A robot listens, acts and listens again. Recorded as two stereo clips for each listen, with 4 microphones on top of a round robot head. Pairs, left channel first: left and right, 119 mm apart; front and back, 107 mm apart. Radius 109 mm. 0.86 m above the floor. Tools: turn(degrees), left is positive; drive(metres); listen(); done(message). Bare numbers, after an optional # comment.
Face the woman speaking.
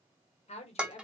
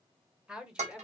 # The woman speaking: 100° left.
turn(100)
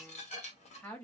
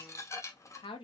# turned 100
# The woman speaking is now 15° left.
turn(15)
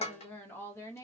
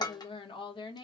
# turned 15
# The woman speaking is now 30° left.
turn(30)
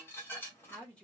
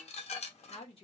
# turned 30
# The woman speaking is now 10° left.
turn(10)
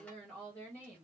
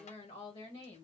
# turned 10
# The woman speaking is now 15° left.
turn(15)
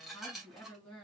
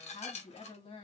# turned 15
# The woman speaking is now 10° left.
turn(10)
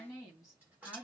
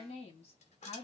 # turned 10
done("Facing the woman speaking.")